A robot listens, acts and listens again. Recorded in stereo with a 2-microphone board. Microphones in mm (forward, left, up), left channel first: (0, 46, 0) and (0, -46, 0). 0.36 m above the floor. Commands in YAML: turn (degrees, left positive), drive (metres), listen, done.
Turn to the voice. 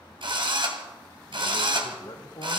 turn: 50
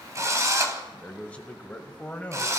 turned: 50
turn: 15
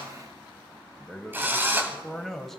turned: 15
done: "Found it: a man speaking, straight ahead, 1 to 2 m away."